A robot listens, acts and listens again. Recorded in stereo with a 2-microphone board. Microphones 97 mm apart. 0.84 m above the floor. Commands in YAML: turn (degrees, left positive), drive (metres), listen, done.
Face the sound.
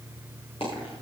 turn: 90
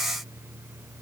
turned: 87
done: "Facing where the dropped coin came from. I can't hear it now."